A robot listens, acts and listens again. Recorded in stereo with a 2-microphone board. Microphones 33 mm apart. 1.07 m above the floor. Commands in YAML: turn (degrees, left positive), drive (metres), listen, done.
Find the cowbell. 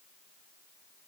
listen: true
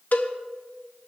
turn: 55
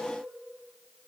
listen: true
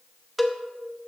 done: "Facing the cowbell, under 1 m away."